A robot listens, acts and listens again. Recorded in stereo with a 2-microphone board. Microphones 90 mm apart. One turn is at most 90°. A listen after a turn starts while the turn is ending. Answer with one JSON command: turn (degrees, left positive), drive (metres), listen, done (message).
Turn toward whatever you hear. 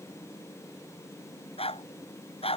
{"turn": 90}
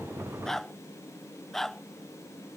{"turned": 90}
{"done": "Found it: a dog barking, straight ahead."}